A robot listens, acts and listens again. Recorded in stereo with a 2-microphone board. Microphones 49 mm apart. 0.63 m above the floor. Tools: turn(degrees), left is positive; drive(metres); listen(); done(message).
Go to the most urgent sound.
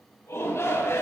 turn(degrees=75)
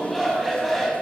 drive(metres=1.0)
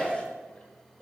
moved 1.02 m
turn(degrees=10)
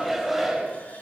drive(metres=1.0)
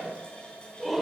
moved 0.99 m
drive(metres=1.0)
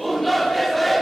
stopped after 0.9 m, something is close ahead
done("Arrived at the shout, straight ahead.")